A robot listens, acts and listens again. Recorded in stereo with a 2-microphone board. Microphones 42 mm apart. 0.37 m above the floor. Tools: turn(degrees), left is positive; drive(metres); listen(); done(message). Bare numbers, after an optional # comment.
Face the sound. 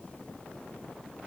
listen()
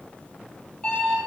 # The alarm clock: about 25° left or 155° left.
turn(25)
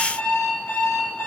# So it is at 125° left.
turn(125)
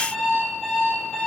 # The alarm clock is now 10° left.
turn(10)
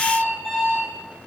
done("Facing the alarm clock, over 4 m away.")